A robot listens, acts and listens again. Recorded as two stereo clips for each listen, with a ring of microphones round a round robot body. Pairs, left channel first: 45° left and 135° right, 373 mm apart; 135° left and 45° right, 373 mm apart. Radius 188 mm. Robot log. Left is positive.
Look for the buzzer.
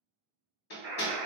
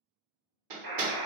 note: The buzzer: 75° right.
cmd yaw -75
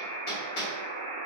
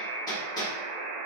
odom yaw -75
end: Found it: a buzzer, straight ahead, 1 to 2 m away.